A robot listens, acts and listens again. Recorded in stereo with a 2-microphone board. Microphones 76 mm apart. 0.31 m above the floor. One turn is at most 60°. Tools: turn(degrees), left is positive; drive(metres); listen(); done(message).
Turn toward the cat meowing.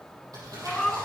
turn(degrees=30)
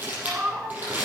turn(degrees=-20)
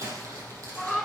done("Found it: a cat meowing, straight ahead.")